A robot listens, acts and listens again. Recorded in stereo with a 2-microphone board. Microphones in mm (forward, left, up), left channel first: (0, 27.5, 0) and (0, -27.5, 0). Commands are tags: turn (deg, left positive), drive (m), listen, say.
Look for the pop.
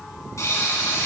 <turn deg="75"/>
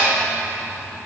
<listen/>
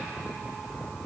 <say>I heard a pop, but can't make it out now. It was about straight ahead or 30° left.</say>